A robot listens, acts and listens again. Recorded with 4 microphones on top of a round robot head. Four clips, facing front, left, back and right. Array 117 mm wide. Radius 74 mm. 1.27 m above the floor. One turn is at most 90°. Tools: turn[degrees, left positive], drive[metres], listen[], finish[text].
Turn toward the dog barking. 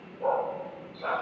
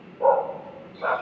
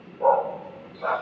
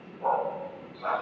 Thought: The dog barking: 105° left.
Action: turn[90]
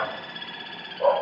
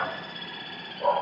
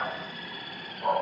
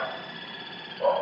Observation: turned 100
Thought: The dog barking is now 25° right.
Action: turn[-25]
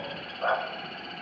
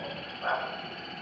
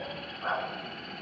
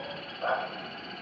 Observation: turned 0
Thought: The dog barking is now 30° right.
Action: turn[-30]
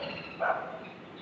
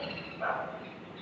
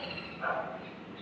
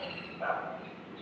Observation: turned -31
Action: finish[Found it: a dog barking, straight ahead.]